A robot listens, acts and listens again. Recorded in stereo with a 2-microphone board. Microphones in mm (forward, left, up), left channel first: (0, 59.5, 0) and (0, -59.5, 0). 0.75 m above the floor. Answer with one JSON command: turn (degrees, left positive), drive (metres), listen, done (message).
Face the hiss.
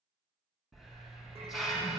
{"turn": 30}
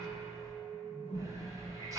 {"turn": -35}
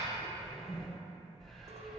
{"done": "Facing the hiss, 1 to 2 m away."}